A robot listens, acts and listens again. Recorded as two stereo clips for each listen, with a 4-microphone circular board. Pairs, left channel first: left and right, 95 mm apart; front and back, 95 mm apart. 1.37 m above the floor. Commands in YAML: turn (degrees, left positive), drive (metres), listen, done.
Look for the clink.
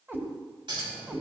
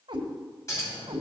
turn: -55
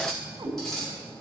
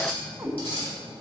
done: "Facing the clink."